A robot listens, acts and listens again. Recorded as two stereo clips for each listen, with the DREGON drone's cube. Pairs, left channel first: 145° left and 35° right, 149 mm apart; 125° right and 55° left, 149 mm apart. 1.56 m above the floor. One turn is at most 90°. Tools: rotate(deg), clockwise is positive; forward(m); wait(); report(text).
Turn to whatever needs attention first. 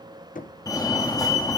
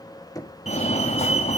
rotate(90)
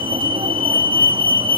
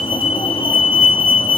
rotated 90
rotate(80)
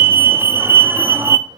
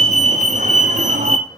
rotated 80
rotate(-40)
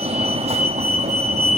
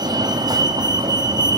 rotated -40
report("Found it: a fire alarm, straight ahead, 1 to 2 m away.")